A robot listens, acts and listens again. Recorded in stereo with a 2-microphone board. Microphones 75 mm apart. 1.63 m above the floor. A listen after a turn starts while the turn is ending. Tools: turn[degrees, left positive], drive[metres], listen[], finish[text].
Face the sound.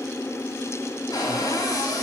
Thought: The cupboard door: about 60° left or 120° left.
Action: turn[60]
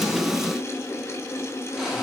Action: listen[]
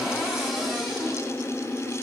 Action: finish[Facing the cupboard door.]